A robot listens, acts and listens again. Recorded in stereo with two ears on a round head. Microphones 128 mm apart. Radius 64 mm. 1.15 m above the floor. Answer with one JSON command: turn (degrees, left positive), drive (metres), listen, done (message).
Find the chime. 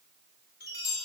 {"turn": 90}
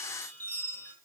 {"turn": 15}
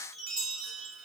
{"done": "Facing the chime."}